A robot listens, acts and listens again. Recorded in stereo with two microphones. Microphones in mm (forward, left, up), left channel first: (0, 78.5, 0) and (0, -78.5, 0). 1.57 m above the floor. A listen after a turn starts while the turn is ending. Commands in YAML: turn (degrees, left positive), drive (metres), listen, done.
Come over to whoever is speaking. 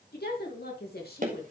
turn: 90
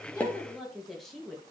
drive: 1.0
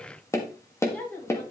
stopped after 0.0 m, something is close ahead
turn: 10
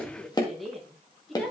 done: "Something is in my way. I am facing the woman speaking but have not reached it."